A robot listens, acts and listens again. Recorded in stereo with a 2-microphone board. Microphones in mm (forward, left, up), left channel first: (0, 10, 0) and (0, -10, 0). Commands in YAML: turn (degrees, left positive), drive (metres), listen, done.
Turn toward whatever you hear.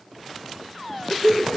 turn: 75
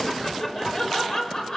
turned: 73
turn: 45
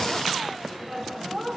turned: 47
turn: 10
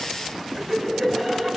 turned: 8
done: "Facing the laughter."